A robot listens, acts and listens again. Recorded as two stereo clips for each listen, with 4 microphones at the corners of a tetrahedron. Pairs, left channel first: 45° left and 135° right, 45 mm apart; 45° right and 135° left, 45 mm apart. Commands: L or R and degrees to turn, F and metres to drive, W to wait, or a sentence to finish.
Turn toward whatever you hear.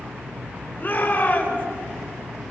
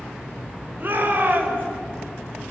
L90
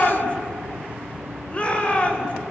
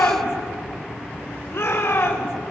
R15
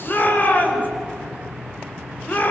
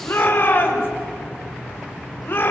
Facing the shout, over 4 m away.